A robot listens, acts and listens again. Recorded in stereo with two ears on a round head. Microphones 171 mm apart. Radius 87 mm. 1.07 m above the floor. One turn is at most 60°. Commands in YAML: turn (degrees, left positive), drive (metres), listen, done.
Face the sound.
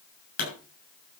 turn: 45
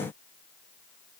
listen: true
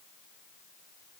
done: "I heard a pop, but can't make it out now. It was about straight ahead or 90° left."